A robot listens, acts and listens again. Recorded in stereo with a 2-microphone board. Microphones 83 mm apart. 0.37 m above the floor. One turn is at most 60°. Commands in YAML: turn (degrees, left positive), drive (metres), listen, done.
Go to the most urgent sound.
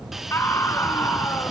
turn: 30
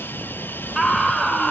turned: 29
drive: 1.0
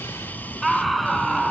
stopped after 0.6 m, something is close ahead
done: "Blocked. The scream is further on, straight ahead."